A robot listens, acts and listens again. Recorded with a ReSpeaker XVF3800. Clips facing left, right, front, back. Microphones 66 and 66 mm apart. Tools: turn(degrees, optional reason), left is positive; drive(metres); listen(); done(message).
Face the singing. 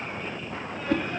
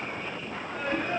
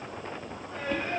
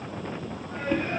turn(degrees=-130, reason="The singing: 130° right.")
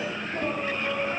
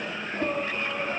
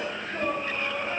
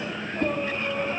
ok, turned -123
turn(degrees=-20, reason="The singing is now 20° right.")
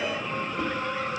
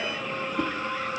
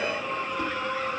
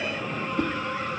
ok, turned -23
done("Found it: singing, straight ahead, over 4 m away.")